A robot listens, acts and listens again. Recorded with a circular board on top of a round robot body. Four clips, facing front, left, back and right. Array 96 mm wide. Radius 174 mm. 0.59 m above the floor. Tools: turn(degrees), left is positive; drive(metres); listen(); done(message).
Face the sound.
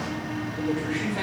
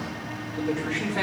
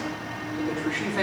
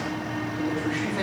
turn(degrees=80)
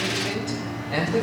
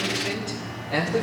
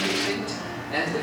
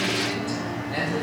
turn(degrees=35)
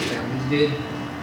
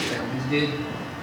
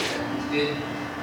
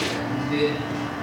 done("Facing the man speaking.")